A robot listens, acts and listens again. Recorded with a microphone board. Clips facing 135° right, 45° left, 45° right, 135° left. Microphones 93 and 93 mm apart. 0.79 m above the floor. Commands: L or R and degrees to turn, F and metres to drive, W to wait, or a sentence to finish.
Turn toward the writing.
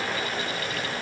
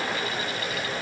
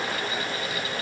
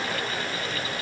W
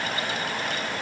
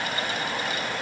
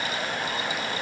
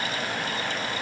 W
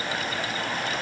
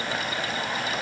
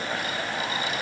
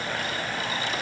I can't make out writing to turn to.